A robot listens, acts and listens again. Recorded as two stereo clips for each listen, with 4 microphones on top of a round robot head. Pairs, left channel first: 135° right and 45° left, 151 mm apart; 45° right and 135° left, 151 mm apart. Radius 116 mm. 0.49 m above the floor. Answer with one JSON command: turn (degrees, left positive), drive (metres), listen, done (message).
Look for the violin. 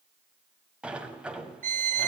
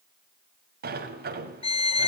{"turn": 10}
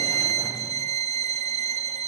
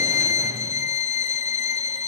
{"done": "Found it: a violin, straight ahead."}